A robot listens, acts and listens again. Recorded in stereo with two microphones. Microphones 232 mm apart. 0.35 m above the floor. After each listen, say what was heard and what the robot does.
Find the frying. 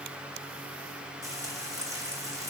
Turn 30° right.
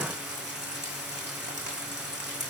So it is at 135° right. Turn 135° right.
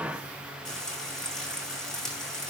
Found it: frying, straight ahead.